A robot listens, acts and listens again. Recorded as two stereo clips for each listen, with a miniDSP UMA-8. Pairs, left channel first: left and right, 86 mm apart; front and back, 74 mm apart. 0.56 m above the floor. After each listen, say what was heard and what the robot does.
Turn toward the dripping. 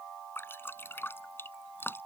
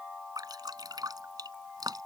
The dripping: 155° left. Turn 155° left.
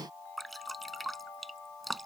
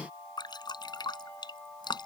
Found it: dripping, straight ahead.